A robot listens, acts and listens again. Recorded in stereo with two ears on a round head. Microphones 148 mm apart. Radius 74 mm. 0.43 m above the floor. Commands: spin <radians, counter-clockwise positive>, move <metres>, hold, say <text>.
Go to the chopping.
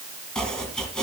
spin 0.52
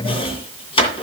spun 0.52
spin 2.53
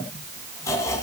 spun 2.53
spin 0.35
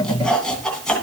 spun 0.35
move 1.0
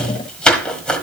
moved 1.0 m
move 1.0
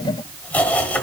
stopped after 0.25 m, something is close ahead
spin 0.17
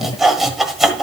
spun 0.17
say Arrived at the chopping, straight ahead.